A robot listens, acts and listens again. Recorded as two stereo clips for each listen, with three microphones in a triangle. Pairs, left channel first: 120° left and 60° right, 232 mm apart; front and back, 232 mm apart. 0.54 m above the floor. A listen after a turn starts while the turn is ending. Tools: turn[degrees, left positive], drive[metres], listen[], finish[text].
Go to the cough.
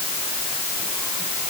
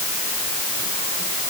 Action: listen[]
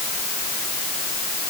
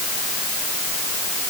Action: listen[]
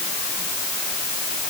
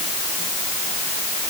Action: finish[I can't make out a cough.]